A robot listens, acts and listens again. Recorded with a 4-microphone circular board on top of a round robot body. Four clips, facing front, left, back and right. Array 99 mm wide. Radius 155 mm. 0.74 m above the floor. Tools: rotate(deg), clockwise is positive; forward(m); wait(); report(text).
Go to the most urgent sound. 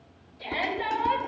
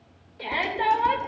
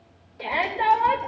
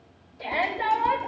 rotate(-150)
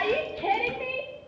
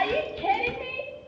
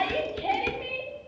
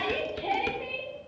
forward(1.0)
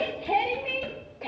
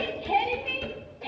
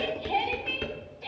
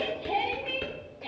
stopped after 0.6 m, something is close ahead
report("Blocked. The shout is further on, straight ahead.")